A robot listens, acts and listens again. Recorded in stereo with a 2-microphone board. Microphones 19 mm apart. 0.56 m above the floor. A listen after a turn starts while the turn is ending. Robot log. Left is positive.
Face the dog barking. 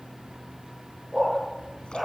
note: The dog barking: about 20° right or 160° right.
cmd yaw -20
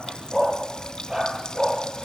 note: The dog barking: about 35° right or 145° right.
cmd yaw -35
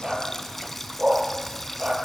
note: So it is at 115° right.
cmd yaw -115
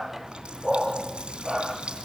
note: The dog barking is now 20° right.
cmd yaw -20
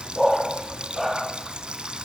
end: Found it: a dog barking, straight ahead.